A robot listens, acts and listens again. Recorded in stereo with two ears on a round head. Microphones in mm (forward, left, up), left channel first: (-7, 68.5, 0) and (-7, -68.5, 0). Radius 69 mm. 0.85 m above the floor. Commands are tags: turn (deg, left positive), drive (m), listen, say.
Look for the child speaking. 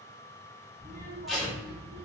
<turn deg="-60"/>
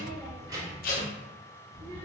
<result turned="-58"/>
<turn deg="-40"/>
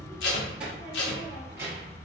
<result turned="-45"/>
<turn deg="-20"/>
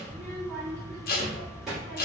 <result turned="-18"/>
<say>Found it: a child speaking, straight ahead, 1 to 2 m away.</say>